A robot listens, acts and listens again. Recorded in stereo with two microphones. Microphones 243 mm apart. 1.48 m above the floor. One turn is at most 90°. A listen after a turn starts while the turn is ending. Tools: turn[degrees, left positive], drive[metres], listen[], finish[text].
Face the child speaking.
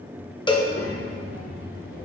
Thought: The child speaking: about 60° left or 120° left.
Action: turn[60]
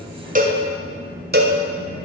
Thought: So it is at 65° left.
Action: turn[65]
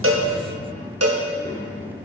Thought: The child speaking is now 35° left.
Action: turn[35]
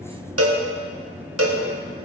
Thought: The child speaking is now 15° left.
Action: turn[15]
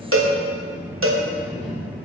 Action: finish[Facing the child speaking, 2 to 4 m away.]